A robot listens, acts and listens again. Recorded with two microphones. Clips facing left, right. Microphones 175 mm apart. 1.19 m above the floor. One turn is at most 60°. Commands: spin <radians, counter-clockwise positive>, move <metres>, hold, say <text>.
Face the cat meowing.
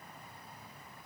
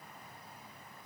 hold
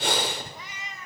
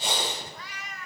spin 0.35
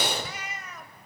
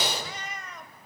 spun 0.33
spin 0.52
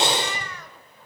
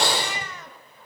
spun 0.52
spin -0.35
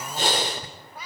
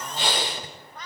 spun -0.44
spin 0.17
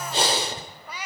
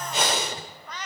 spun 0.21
spin 0.17
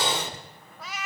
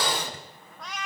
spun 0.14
say Found it: a cat meowing, straight ahead.